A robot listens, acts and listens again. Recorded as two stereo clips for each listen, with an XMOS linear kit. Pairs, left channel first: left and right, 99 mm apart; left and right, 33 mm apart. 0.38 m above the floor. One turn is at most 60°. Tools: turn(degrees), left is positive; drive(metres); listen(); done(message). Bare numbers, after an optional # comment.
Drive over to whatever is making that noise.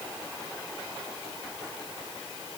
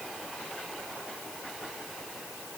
listen()
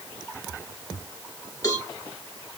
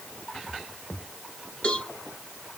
# The cowbell: about 35° left or 145° left.
turn(35)
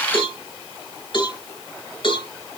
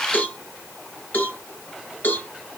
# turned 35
# So it is at 95° left.
turn(60)
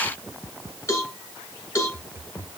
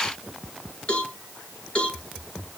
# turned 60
# The cowbell is now 40° left.
turn(40)
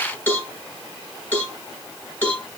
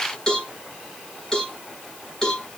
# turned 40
# The cowbell is now 20° left.
turn(20)
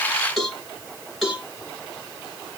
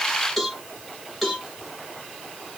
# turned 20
drive(1.0)
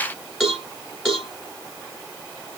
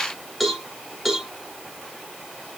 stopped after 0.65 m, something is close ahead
done("I am next to the cowbell.")